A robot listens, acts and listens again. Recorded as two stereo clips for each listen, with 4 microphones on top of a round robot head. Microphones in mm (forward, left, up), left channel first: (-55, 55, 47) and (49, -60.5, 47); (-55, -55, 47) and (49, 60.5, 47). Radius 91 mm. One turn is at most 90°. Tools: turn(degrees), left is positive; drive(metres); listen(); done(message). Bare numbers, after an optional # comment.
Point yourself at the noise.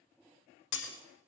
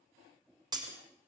# The breaking glass: 115° left.
turn(90)
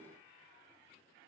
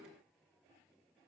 # Nothing new. It was at 25° left.
turn(25)
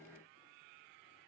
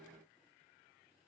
done("Facing where the breaking glass came from. I can't hear it now.")